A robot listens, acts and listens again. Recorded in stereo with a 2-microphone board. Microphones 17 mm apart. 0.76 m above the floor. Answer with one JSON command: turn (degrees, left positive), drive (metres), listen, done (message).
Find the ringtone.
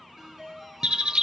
{"turn": -25}
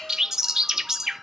{"listen": true}
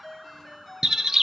{"done": "Facing the ringtone, over 4 m away."}